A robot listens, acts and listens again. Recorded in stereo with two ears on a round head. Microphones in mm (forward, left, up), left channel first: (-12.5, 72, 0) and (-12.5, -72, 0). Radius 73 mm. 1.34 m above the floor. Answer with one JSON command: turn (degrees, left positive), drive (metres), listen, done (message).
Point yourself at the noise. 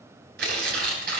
{"turn": -70}
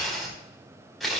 {"done": "Facing the tearing paper."}